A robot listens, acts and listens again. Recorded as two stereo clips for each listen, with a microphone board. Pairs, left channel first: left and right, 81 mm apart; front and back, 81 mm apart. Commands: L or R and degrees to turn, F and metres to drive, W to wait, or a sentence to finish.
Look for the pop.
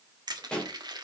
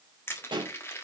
L170
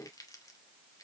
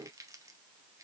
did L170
I heard a pop from this way, but can't make it out now.